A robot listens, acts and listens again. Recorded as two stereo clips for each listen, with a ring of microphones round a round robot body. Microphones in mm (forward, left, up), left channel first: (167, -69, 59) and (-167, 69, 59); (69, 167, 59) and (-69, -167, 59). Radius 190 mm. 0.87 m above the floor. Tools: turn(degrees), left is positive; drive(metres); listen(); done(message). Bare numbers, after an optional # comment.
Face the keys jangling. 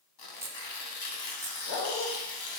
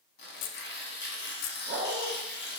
# The keys jangling: 75° left.
turn(75)
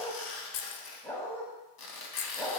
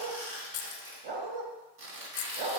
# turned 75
# The keys jangling is now 15° left.
turn(15)
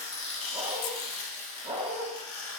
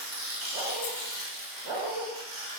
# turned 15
listen()
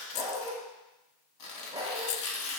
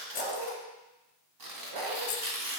done("Found it: keys jangling, straight ahead.")